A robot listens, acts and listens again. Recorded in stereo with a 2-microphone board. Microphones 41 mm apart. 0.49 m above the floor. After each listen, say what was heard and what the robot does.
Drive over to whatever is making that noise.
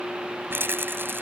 The rattle: about 65° right or 115° right. Turn 65° right.
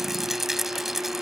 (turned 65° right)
Drive 1.0 m forward.
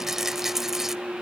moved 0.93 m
The rattle is now 10° right. Turn 10° right.
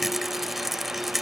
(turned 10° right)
Drive 1.0 m forward.
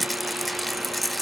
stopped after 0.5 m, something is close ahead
Arrived at the rattle, straight ahead.